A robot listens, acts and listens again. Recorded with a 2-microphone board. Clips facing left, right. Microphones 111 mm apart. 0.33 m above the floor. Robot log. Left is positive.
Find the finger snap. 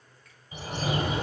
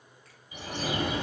cmd idle
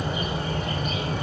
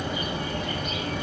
cmd idle
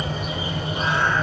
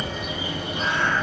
end: I can't make out a finger snap, only a bird.